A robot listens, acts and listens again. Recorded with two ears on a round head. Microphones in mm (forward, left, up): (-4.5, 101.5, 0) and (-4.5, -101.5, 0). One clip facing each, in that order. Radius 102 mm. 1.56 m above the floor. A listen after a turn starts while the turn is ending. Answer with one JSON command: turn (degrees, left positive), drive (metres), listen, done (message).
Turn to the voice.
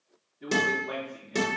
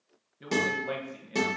{"turn": -65}
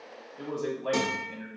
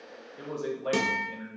{"turn": -15}
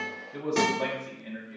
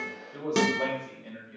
{"done": "Found it: a man speaking, straight ahead."}